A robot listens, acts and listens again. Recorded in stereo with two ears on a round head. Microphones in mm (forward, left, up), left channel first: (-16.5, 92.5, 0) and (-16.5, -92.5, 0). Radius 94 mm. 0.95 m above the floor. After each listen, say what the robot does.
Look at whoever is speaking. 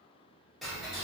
Keep listening.
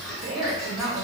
Turn 70° right.
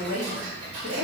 Turn 30° right.
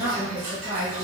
Turn 30° right.
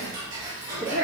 Turn 40° right.
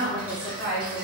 Turn 20° right.
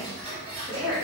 Turn 10° right.
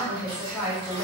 Found it: a woman speaking, straight ahead, 1 to 2 m away.